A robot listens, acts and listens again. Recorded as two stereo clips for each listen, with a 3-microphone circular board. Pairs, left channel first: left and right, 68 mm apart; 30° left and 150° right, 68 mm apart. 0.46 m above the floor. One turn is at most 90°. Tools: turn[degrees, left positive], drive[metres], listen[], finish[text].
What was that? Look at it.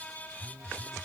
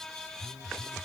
Thought: The phone buzzing: 20° right.
Action: turn[-20]
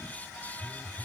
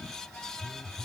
Action: finish[Found it: a phone buzzing, straight ahead.]